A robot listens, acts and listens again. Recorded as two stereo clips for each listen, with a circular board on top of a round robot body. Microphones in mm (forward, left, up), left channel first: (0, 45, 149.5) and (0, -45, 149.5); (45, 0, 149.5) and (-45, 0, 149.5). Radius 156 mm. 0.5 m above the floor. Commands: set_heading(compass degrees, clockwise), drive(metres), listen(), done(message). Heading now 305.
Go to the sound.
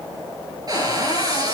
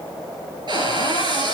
set_heading(85)
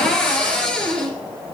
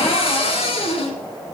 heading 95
set_heading(85)
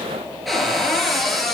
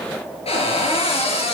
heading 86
drive(1.0)
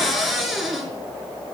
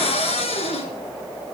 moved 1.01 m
drive(1.0)
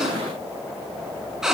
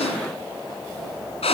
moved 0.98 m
drive(1.0)
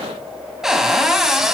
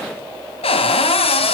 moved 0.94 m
drive(1.0)
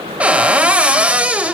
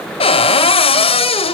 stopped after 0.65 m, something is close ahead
set_heading(101)
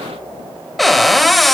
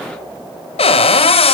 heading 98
done("Arrived at the cupboard door, straight ahead.")